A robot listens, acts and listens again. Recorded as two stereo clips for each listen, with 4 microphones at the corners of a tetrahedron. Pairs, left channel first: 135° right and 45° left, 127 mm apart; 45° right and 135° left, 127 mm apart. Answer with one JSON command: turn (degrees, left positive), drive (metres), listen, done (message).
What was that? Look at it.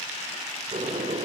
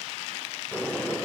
{"turn": 35}
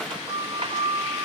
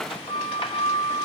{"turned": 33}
{"done": "Found it: a sliding door, straight ahead, 2 to 4 m away."}